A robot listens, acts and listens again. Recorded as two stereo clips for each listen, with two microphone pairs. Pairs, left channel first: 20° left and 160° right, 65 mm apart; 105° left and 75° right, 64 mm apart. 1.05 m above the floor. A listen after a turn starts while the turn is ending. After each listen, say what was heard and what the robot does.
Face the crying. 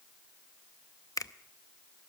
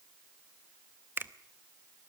Keep listening.
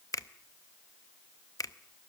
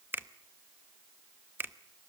Keep listening.
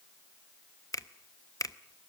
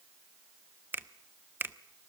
I can't make out crying to turn to.